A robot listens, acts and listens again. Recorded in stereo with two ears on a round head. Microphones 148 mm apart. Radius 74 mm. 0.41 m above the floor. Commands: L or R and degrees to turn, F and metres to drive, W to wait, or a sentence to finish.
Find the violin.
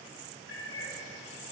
W
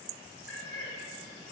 W
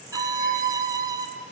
R25
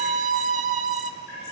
R130
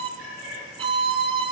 R35
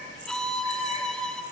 Facing the violin, under 1 m away.